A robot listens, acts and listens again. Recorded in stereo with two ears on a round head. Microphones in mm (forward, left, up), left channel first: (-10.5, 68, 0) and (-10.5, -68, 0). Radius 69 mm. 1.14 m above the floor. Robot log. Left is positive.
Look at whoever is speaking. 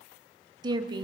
note: The woman speaking: about 30° right or 150° right.
cmd yaw -30
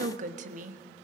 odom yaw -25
note: So it is at 125° right.
cmd yaw -125
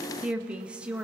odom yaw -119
end: Found it: a woman speaking, straight ahead, 1 to 2 m away.